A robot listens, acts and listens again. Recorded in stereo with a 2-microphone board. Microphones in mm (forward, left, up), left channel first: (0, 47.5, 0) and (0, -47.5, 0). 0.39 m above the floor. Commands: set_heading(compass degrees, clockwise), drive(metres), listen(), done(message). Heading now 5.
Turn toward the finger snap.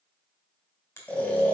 set_heading(335)
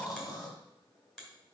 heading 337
done("Found it: a finger snap, straight ahead.")